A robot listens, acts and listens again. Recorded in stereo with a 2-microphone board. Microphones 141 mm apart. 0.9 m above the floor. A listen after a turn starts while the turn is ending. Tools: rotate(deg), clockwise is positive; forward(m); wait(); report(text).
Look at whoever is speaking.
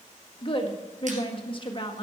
rotate(-35)
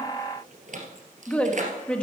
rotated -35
rotate(-10)
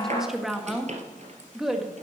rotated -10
report("Facing the woman speaking, 1 to 2 m away.")